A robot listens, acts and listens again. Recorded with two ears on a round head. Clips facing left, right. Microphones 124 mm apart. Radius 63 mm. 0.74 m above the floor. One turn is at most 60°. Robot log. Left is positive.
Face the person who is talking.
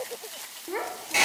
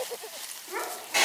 note: The child speaking: about 35° left or 145° left.
cmd yaw +35
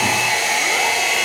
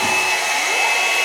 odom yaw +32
cmd idle
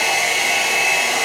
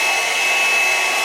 cmd idle
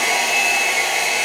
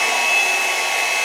end: I heard a child speaking, but can't make it out now. It was about 5° left or 115° left.